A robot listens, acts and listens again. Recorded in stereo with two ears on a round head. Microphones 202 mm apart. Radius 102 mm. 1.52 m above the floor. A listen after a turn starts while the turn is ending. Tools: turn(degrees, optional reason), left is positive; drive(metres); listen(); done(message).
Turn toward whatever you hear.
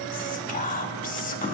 turn(degrees=40, reason="The whispering: about 40° left or 140° left.")
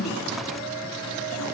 listen()
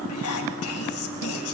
turn(degrees=100, reason="So it is at 100° left.")
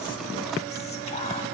listen()
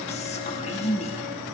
turn(degrees=30, reason="The whispering is now 30° left.")
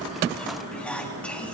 done("Facing the whispering.")